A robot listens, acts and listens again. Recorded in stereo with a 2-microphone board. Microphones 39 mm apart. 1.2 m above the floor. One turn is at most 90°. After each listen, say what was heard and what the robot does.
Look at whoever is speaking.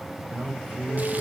The man speaking: about 45° right or 135° right. Turn 45° right.
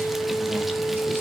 Keep listening.
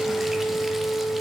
Keep listening.
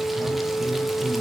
I heard a man speaking, but can't make it out now. It was about straight ahead or 90° right.